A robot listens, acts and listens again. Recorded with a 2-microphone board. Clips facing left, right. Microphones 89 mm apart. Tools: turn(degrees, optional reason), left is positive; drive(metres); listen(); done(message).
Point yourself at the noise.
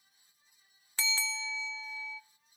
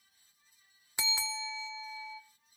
turn(degrees=-15, reason="The bell: about 15° right or 165° right.")
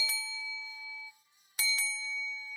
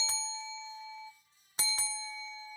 turn(degrees=-150, reason="So it is at 150° right.")
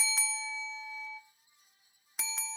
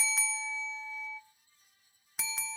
done("Found it: a bell, straight ahead.")